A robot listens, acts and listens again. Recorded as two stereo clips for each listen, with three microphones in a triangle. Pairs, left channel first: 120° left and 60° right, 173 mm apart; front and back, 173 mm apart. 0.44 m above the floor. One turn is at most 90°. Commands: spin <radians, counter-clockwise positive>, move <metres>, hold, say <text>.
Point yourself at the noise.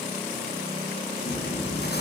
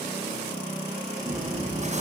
spin 1.57
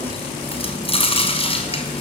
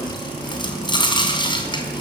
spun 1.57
spin 1.13
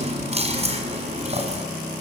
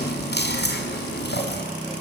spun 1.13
spin -0.17
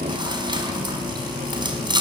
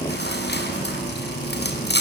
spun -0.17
say Found it: chewing, straight ahead, over 4 m away.